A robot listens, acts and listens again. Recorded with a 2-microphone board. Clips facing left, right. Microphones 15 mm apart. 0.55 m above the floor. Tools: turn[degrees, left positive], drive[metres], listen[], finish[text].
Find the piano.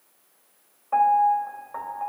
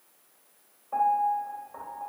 Thought: The piano: about 65° left or 115° left.
Action: turn[65]
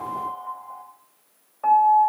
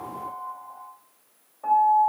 Thought: So it is at 50° left.
Action: turn[50]
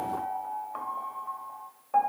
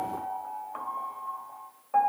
Action: finish[Found it: a piano, straight ahead.]